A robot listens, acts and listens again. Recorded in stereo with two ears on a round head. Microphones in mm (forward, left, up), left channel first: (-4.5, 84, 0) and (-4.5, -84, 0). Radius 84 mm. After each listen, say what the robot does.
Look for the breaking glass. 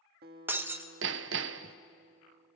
Turn 30° right.
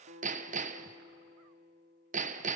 Keep listening.
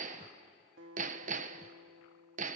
I heard breaking glass, but can't make it out now. It was about 20° left or 140° right.